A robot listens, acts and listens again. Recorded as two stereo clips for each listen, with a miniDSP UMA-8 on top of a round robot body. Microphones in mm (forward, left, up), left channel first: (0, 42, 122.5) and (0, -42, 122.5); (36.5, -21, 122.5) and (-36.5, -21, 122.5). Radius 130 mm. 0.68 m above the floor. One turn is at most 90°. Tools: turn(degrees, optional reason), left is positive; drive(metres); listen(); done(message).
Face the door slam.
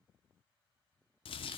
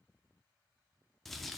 listen()
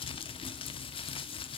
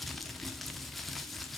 listen()
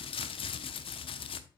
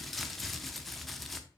done("I can't make out a door slam to turn to.")